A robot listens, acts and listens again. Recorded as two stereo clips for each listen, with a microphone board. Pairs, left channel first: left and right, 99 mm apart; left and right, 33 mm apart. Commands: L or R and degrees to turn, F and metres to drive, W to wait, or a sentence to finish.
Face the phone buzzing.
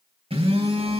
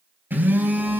R90
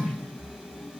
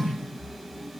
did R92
R10
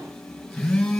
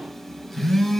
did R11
Facing the phone buzzing, 2 to 4 m away.